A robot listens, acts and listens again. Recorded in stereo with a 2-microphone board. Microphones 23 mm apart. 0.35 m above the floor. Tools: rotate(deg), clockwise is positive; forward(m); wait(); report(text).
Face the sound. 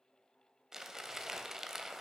rotate(15)
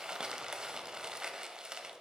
rotate(150)
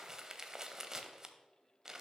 rotate(30)
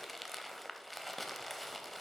report("Found it: crumpling, straight ahead, under 1 m away.")